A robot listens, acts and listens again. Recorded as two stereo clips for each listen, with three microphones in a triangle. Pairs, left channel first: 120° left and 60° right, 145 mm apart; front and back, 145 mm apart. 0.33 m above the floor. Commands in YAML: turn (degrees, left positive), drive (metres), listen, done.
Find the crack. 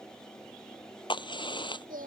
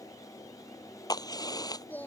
turn: 65
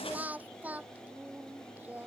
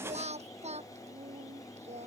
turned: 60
done: "I heard a crack from this way, but can't make it out now."